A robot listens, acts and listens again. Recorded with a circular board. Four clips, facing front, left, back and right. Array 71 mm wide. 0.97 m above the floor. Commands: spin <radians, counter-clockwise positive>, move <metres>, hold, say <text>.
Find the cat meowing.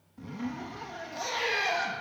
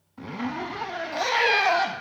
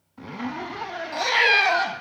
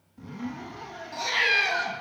spin 2.97
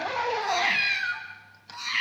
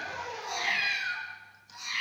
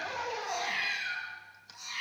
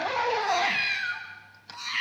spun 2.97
spin -0.61
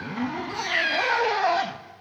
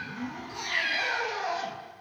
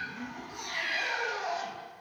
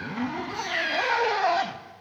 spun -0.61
spin -0.26
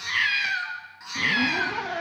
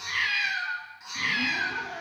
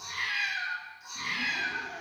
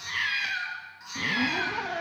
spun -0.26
say Found it: a cat meowing, straight ahead.